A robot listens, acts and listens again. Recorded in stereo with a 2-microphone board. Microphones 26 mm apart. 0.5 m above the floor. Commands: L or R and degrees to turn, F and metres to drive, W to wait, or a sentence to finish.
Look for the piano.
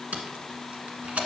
W
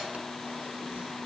W
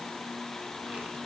I can't make out a piano, only tape being pulled.